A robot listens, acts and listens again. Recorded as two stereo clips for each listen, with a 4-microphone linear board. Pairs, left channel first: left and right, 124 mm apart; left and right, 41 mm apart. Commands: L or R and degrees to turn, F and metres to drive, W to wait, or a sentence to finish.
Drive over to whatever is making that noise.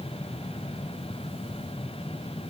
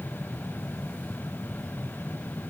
W
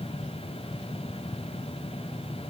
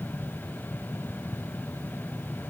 W
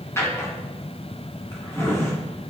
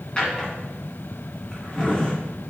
L20
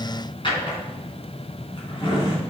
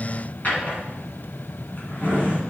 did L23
L135
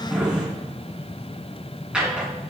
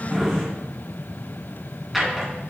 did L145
R10
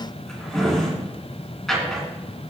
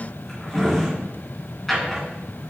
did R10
F1.0
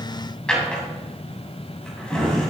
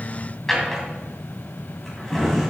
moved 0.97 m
F1.0
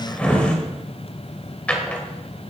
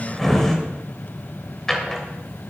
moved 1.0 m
L10
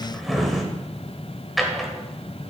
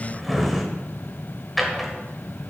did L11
F1.0
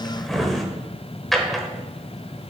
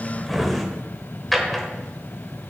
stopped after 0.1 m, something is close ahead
Arrived at the drawer, straight ahead.